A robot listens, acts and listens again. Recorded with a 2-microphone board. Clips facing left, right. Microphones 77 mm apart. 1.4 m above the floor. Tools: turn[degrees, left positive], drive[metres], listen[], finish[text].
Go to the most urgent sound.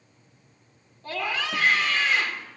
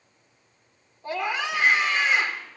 Thought: The scream: about 20° right or 160° right.
Action: turn[-20]
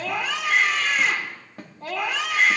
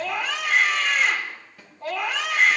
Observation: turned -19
Action: drive[1.0]
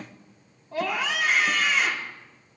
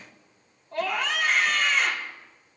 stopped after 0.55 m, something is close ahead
Action: finish[Something is in my way. I am facing the scream but have not reached it.]